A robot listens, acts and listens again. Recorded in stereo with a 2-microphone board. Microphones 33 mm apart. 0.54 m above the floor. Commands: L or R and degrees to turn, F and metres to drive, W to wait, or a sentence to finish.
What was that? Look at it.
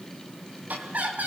R55
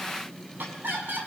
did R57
R65
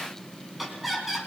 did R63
Facing the laughter.